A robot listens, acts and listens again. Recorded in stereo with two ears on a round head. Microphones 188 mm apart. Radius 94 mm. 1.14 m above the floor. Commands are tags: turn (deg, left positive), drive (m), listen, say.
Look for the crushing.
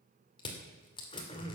<turn deg="25"/>
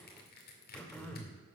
<turn deg="135"/>
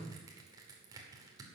<turn deg="-20"/>
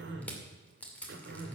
<say>Facing the crushing, 2 to 4 m away.</say>